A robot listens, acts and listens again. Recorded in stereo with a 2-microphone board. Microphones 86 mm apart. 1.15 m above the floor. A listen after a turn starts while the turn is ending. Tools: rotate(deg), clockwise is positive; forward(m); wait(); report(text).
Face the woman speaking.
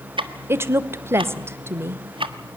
rotate(25)
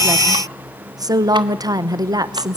rotate(125)
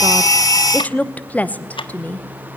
rotate(-20)
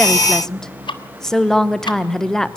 report("Facing the woman speaking, 1 to 2 m away.")